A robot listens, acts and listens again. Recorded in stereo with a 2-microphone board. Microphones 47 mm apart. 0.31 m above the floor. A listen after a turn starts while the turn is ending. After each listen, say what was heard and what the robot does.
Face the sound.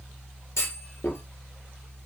Turn 90° left.
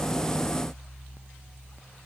I heard a clunk from this way, but can't make it out now.